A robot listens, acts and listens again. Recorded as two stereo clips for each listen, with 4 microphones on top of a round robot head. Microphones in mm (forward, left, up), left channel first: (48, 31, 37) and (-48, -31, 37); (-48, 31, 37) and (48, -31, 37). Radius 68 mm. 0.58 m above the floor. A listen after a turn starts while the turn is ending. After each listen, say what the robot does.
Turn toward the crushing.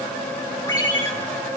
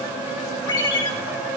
Keep listening.
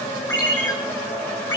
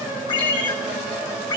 Keep listening.
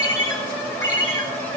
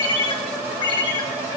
I can't make out crushing to turn to.